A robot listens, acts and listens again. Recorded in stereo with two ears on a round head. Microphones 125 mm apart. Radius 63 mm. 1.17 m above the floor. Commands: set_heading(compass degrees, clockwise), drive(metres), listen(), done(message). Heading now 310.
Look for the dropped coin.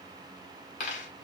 set_heading(255)
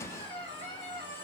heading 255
listen()
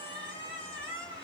done("I heard a dropped coin, but can't make it out now. It was about straight ahead or 70° left.")